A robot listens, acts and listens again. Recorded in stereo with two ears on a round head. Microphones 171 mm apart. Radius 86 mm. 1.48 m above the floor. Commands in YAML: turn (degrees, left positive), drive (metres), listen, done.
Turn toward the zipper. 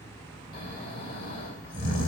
listen: true
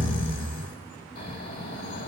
listen: true
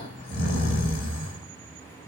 done: "I can't make out a zipper, only snoring."